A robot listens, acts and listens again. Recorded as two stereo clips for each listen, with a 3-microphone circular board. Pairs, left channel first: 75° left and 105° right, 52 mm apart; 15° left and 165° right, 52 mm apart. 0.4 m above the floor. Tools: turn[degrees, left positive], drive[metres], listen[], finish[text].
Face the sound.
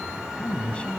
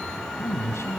Thought: The man speaking: 10° left.
Action: turn[10]
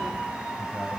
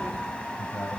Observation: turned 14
Action: listen[]
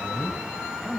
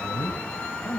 Action: finish[Facing the man speaking.]